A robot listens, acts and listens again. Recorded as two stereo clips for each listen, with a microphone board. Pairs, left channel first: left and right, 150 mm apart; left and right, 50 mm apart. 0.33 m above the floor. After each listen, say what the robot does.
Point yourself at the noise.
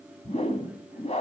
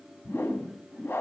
Turn 45° left.
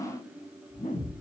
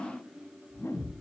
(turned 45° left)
Turn 80° left.
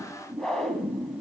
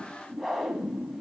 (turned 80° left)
Found it: a whoosh, straight ahead, 1 to 2 m away.